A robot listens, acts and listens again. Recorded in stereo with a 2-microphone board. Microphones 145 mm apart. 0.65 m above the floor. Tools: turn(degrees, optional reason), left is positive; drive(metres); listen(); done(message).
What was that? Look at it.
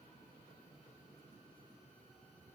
listen()
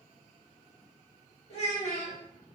turn(degrees=50, reason="The child speaking: about 50° left or 130° left.")
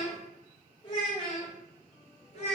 turn(degrees=50, reason="So it is at 50° left.")
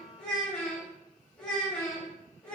turn(degrees=10, reason="The child speaking is now 10° left.")
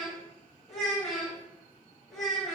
done("Facing the child speaking, 1 to 2 m away.")